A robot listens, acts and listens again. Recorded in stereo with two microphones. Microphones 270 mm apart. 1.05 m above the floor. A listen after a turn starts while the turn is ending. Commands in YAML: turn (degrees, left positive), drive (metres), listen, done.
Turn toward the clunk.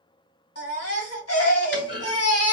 turn: 45
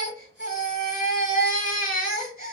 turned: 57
listen: true
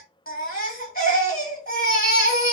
done: "I heard a clunk, but can't make it out now. It was about 10° right or 75° left."